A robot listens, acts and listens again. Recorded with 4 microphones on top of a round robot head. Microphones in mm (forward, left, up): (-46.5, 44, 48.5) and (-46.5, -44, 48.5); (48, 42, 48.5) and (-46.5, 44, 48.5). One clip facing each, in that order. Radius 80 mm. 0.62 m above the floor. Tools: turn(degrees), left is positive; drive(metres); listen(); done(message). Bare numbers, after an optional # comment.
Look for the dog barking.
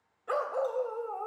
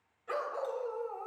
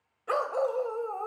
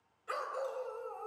# The dog barking: 30° left.
turn(30)
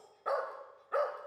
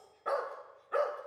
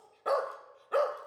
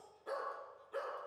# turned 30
done("Facing the dog barking, 1 to 2 m away.")